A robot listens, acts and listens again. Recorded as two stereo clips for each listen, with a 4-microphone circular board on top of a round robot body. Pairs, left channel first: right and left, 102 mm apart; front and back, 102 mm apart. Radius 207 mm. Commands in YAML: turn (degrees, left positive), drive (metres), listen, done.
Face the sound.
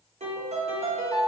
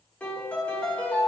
turn: 75
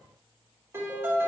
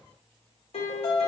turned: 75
turn: 25
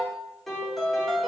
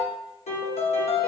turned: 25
done: "Facing the piano."